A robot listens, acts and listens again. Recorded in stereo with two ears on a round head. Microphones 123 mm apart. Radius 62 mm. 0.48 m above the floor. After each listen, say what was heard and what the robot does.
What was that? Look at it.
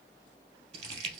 The crumpling: about 50° right or 130° right. Turn 50° right.
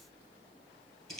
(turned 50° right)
Found it: crumpling, straight ahead.